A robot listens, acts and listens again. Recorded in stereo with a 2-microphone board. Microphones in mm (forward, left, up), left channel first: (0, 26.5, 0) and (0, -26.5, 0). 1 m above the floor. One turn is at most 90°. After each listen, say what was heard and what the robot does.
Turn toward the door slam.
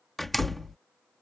Turn 30° left.
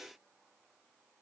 Keep listening.
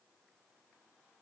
I heard a door slam, but can't make it out now. It was about 30° right or 150° left.